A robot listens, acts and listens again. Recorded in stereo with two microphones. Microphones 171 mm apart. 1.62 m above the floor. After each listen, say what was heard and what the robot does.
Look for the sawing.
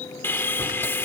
Turn 30° left.
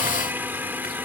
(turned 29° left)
So it is at 15° right. Turn 15° right.
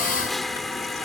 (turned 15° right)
Found it: sawing, straight ahead.